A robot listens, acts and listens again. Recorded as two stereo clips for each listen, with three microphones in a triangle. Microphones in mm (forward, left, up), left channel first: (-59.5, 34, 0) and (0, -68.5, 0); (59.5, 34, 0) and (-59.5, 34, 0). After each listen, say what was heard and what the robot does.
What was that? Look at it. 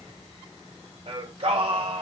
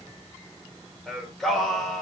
The singing: 90° right. Turn 90° right.
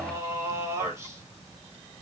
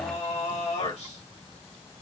Found it: singing, straight ahead.